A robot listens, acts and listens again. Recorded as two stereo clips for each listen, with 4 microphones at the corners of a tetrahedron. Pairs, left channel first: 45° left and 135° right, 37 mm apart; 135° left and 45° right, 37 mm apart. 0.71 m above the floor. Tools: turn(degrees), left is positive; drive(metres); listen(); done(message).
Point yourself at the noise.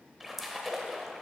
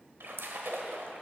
turn(degrees=-45)
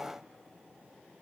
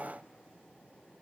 done("I heard a splash from this way, but can't make it out now.")